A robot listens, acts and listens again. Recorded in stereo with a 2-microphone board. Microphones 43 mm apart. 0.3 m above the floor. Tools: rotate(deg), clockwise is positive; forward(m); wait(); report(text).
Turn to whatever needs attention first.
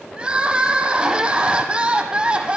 rotate(25)
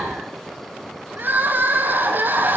rotate(135)
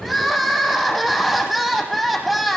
report("Found it: crying, straight ahead.")